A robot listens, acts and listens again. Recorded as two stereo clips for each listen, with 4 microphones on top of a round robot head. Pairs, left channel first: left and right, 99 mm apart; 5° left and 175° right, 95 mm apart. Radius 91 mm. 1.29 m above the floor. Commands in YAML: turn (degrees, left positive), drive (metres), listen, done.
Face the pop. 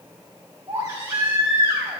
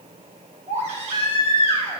listen: true
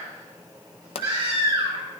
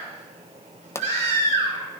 turn: 65
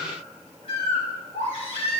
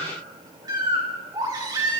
done: "Facing where the pop came from. I can't hear it now."